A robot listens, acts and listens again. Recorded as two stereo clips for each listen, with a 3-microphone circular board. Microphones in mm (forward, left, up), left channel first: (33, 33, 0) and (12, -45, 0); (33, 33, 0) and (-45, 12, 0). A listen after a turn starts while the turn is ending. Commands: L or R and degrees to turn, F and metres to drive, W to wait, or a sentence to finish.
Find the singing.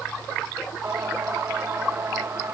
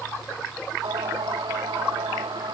R160
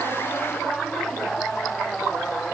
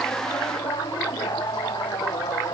Facing the singing.